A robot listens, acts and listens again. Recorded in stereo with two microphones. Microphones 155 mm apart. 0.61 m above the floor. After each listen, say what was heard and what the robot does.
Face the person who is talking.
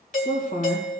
The woman speaking: about 50° left or 130° left. Turn 50° left.
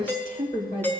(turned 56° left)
So it is at 70° left. Turn 70° left.
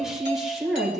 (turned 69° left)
Facing the woman speaking, 2 to 4 m away.